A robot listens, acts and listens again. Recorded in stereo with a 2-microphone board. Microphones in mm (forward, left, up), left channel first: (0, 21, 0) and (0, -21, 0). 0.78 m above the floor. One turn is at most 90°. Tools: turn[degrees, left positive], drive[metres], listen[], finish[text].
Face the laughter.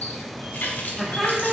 Action: turn[-30]
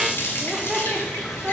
Thought: The laughter: about 15° right or 165° right.
Action: turn[-15]
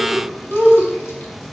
Thought: The laughter: about 20° right or 160° right.
Action: turn[-20]
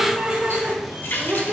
Thought: The laughter: about 25° right or 155° right.
Action: turn[-25]
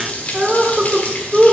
Action: turn[-30]
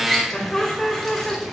Thought: So it is at 25° left.
Action: turn[25]
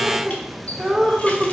Action: finish[Facing the laughter, 2 to 4 m away.]